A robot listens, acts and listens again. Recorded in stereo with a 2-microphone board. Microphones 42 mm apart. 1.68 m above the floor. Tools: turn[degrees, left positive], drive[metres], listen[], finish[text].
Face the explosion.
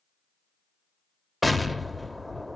Action: turn[30]
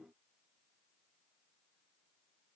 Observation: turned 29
Action: listen[]
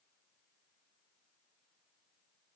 Action: finish[I heard an explosion, but can't make it out now. It was about 30° right or 150° left.]